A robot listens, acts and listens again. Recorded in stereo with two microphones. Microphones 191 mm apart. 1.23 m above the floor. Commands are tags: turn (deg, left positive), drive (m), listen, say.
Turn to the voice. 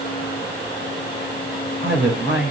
<turn deg="-75"/>
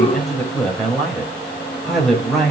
<say>Found it: a man speaking, straight ahead, over 4 m away.</say>